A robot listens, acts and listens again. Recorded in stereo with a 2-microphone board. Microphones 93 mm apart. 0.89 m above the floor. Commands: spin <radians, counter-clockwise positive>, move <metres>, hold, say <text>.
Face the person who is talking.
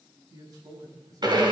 spin -0.79
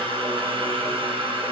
hold
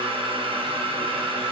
hold
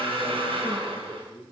say Facing the man speaking, over 4 m away.